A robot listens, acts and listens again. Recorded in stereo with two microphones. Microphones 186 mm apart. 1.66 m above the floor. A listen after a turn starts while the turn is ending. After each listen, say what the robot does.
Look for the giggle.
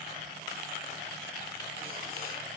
Keep listening.
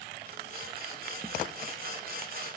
Keep listening.
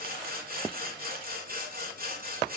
I can't make out a giggle, only sawing.